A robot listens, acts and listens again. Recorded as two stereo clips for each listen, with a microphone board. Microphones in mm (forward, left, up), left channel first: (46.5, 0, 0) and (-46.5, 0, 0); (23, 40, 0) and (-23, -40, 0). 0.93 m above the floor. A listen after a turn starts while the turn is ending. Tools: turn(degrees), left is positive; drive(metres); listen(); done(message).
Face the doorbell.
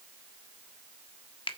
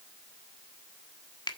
listen()
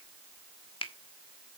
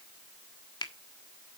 listen()
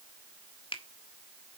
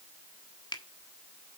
done("I can't make out a doorbell to turn to.")